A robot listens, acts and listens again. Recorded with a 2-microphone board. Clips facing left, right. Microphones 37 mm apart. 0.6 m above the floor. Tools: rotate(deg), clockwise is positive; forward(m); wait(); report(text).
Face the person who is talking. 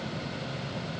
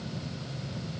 wait()
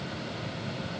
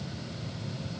wait()
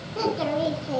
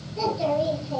rotate(-75)
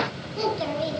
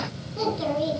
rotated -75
report("Found it: a child speaking, straight ahead.")